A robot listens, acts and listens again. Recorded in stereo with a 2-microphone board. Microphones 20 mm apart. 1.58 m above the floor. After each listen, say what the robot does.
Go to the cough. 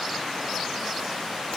Keep listening.
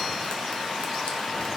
Keep listening.
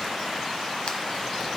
I can't make out a cough.